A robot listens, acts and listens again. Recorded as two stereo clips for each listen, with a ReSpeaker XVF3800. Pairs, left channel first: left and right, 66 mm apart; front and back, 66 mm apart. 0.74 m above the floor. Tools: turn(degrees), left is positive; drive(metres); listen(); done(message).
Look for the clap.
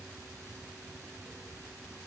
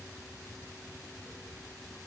listen()
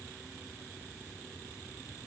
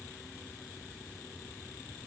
listen()
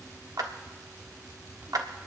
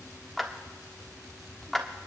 turn(degrees=-85)
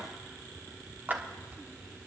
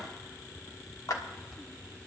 turn(degrees=-25)
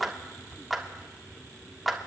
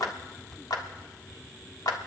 done("Found it: a clap, straight ahead, 1 to 2 m away.")